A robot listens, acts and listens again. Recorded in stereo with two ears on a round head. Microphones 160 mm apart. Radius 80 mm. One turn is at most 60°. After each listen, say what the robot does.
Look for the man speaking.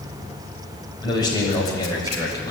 Turn 20° left.
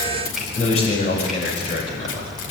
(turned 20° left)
Turn 35° left.
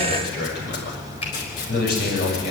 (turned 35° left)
Turn 60° left.
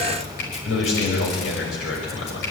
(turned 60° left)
Turn 60° left.
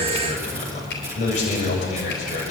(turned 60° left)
Turn 40° left.
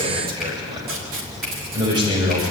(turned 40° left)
Turn 25° right.
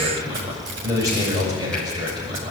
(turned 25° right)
Turn 20° right.
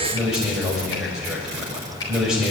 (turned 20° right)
Facing the man speaking, over 4 m away.